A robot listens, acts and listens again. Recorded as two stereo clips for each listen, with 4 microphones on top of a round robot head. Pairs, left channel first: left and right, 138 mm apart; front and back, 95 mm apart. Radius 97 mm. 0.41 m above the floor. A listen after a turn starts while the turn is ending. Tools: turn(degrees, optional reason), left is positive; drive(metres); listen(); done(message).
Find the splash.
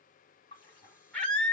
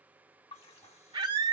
turn(degrees=25, reason="The splash: 25° left.")
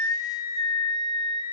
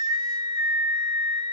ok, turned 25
done("I heard a splash from this way, but can't make it out now.")